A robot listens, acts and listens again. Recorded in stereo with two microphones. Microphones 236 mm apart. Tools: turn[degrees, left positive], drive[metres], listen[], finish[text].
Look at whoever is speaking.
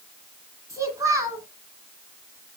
Action: turn[-30]
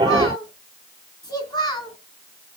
Thought: So it is at 15° left.
Action: turn[15]
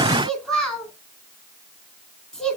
Action: finish[Found it: a child speaking, straight ahead, 2 to 4 m away.]